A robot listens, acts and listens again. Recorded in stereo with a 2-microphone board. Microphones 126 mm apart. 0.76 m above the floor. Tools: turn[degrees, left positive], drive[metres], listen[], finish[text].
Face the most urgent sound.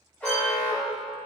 Action: turn[30]
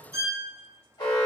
Thought: So it is at 135° left.
Action: turn[135]
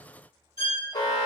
Thought: The alarm is now 45° left.
Action: turn[45]
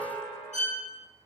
Thought: The alarm is now 10° left.
Action: turn[10]
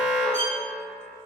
Action: finish[Facing the alarm, under 1 m away.]